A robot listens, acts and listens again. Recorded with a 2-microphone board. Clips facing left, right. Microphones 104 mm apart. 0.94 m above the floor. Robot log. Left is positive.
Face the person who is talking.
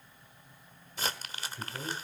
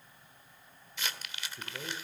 cmd yaw -30
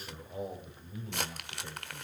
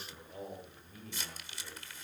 note: So it is at 20° left.
cmd yaw +20
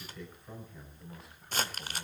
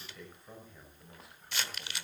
end: Found it: a man speaking, straight ahead, over 4 m away.